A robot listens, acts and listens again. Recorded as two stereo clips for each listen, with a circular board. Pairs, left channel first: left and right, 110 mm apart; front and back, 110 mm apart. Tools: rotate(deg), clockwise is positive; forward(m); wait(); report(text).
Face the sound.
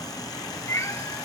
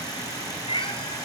rotate(-30)
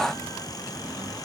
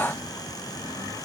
wait()
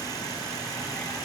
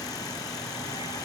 wait()
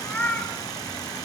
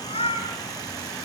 rotate(-20)
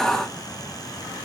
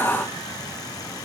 wait()
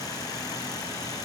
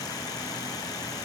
wait()
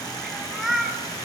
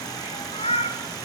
report("Found it: a cat meowing, straight ahead, 2 to 4 m away.")